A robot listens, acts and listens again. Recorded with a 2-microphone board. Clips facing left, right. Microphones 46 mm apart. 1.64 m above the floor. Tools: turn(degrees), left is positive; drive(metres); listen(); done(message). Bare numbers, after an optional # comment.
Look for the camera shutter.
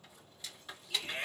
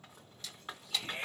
# The camera shutter: about 20° left or 160° left.
turn(20)
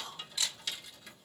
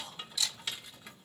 # So it is at 140° left.
turn(140)
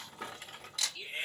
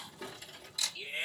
# The camera shutter is now 55° left.
turn(55)
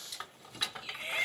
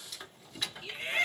listen()
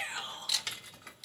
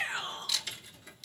done("Facing the camera shutter.")